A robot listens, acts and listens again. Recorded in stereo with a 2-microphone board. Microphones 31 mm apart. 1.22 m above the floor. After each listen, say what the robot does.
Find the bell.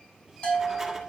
Turn 45° left.
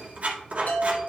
Turn 90° left.
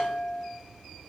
Turn 15° right.
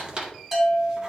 Found it: a bell, straight ahead, 2 to 4 m away.